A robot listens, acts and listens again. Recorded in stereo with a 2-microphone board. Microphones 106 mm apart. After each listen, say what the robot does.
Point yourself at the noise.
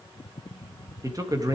Turn 40° right.
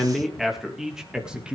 Turn 10° right.
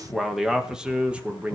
Turn 15° right.
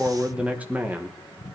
Turn 20° right.
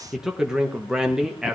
Facing the man speaking.